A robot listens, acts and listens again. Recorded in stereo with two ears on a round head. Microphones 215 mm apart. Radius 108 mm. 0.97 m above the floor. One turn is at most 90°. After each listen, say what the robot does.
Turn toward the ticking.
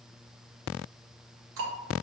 Turn 55° right.
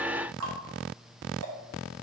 Turn 65° right.
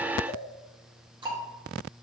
Turn 20° right.
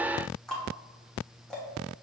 Facing the ticking, under 1 m away.